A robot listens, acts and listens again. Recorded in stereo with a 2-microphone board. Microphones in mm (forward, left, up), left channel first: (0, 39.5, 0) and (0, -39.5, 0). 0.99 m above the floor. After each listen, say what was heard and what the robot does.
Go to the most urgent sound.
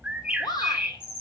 The shout: about 60° left or 120° left. Turn 60° left.
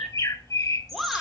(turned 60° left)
Drive 1.0 m forward.
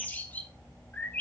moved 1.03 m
Keep listening.
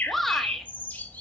Drive 1.0 m forward.
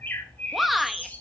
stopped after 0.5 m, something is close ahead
Arrived at the shout, straight ahead.